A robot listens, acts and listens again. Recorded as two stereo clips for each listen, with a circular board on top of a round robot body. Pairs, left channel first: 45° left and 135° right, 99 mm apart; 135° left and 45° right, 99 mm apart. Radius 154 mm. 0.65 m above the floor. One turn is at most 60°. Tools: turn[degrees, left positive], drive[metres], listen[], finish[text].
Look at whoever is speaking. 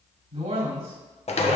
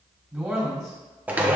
Thought: The man speaking: 135° right.
Action: turn[-60]
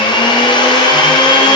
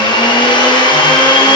Thought: Nothing new. It was at 75° right.
Action: turn[-60]
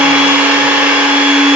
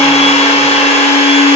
Thought: Nothing new. It was at 15° right.
Action: turn[-15]
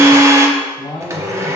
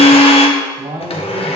Action: finish[Facing the man speaking.]